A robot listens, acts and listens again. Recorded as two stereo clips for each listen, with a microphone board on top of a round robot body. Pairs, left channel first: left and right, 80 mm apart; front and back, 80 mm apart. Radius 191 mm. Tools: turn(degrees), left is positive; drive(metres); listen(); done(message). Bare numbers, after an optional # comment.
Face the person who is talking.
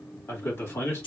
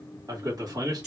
# The man speaking: 145° left.
turn(145)
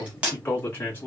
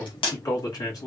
# The man speaking is now 30° left.
turn(30)
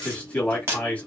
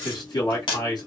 # The man speaking is now 20° left.
turn(20)
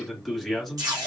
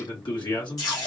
done("Facing the man speaking, 1 to 2 m away.")